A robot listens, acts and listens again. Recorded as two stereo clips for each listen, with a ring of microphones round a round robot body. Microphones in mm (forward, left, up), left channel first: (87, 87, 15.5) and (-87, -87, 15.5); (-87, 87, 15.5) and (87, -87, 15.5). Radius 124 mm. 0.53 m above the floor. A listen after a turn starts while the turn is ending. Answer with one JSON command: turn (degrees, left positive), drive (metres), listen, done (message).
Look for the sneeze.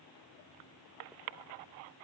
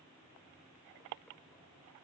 {"listen": true}
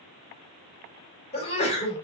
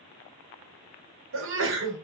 {"turn": -15}
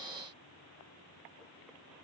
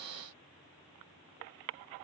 {"done": "Facing where the sneeze came from. I can't hear it now."}